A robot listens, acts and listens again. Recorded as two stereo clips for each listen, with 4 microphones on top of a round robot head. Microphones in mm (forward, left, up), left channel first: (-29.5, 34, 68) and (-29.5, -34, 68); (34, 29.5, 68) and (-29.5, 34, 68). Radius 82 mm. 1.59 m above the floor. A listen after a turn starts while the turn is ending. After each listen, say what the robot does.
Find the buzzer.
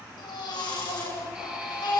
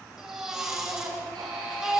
Turn 165° right.
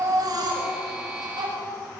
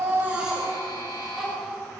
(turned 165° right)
Found it: a buzzer, straight ahead.